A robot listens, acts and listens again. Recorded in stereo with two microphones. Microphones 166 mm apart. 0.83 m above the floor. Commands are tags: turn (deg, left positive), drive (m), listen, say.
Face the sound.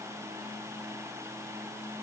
<listen/>
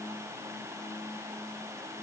<listen/>
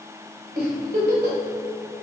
<turn deg="-90"/>
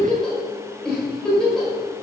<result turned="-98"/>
<say>Facing the giggle, 2 to 4 m away.</say>